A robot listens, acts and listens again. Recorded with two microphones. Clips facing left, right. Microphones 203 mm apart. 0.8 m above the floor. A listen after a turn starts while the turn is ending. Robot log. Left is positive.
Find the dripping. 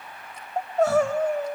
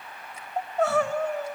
cmd idle
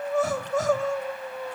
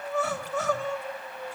cmd idle
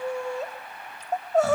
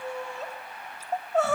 end: I can't make out dripping, only crying.